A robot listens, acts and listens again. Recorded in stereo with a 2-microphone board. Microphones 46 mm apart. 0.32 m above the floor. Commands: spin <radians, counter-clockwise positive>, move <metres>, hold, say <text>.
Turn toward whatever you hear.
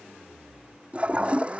spin -0.44
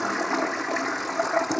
say Found it: a toilet flushing, straight ahead.